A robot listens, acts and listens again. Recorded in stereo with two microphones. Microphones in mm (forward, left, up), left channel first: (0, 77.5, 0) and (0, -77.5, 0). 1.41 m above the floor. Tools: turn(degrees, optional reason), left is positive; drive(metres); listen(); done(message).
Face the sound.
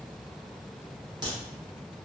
turn(degrees=-30, reason="The crack: about 30° right or 150° right.")
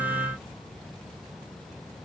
listen()
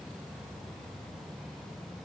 done("I heard a crack, but can't make it out now. It was about straight ahead or 120° right.")